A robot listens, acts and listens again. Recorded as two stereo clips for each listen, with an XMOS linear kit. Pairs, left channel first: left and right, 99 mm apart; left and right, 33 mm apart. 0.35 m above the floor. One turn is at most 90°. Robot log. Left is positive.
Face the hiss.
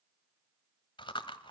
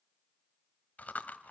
cmd idle
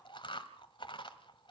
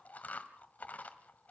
cmd idle
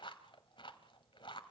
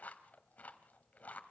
end: I can't make out a hiss to turn to.